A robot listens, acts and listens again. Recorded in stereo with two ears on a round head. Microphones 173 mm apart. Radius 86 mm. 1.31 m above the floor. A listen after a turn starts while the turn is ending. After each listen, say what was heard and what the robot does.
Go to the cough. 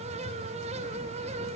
Keep listening.
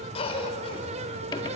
The cough: about 30° left or 150° left. Turn 30° left.
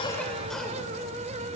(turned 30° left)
Keep listening.
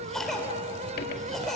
Drive 1.0 m forward.
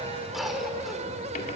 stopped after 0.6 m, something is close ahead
Something is in my way. I am facing the cough but have not reached it.